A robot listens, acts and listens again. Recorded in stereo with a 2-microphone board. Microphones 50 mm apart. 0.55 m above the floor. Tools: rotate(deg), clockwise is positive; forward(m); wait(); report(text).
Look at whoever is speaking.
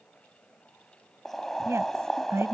rotate(65)
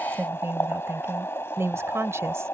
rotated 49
rotate(65)
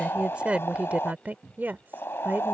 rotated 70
rotate(45)
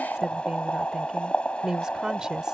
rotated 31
rotate(15)
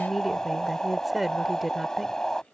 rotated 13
report("Found it: a woman speaking, straight ahead.")